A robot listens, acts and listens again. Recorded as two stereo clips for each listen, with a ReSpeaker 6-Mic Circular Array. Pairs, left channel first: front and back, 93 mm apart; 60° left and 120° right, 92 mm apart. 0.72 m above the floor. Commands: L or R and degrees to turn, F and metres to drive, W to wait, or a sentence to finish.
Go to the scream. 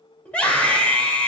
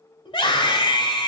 L75
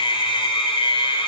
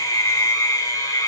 F1.0
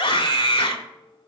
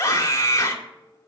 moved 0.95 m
F1.0
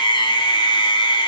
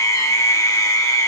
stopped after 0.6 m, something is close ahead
L10
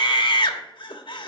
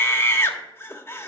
I am next to the scream.